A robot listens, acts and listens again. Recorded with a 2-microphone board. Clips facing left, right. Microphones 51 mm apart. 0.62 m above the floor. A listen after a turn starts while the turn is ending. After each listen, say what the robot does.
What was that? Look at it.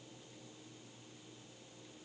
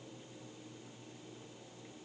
Keep listening.
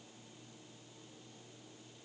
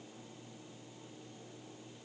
Keep listening.
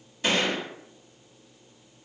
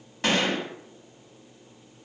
Turn 70° right.
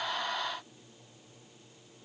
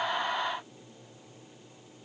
Keep listening.
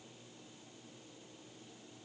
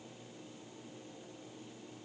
I heard a gunshot, but can't make it out now. It was about straight ahead or 40° right.